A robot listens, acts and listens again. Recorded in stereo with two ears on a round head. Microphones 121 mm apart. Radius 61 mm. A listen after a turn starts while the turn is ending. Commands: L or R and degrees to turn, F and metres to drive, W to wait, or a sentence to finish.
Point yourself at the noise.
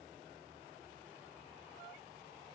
W
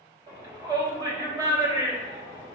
R30
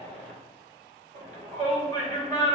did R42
R100
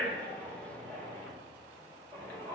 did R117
L15
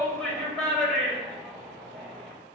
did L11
Found it: a shout, straight ahead.